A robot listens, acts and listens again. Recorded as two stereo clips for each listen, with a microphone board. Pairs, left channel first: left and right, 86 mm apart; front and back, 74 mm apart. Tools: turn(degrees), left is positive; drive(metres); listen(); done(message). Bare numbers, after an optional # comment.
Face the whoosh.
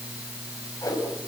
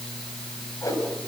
# The whoosh: 40° left.
turn(40)
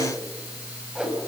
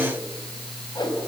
# The whoosh is now 10° right.
turn(-10)
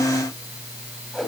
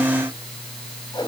done("Facing the whoosh, over 4 m away.")